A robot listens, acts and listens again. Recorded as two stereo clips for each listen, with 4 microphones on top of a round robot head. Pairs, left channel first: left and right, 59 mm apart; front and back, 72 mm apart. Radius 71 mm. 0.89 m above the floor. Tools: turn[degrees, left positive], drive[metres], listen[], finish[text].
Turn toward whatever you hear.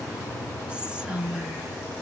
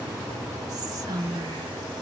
Thought: The whispering: 160° right.
Action: turn[-160]
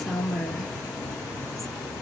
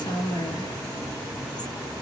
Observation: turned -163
Action: finish[Facing the whispering.]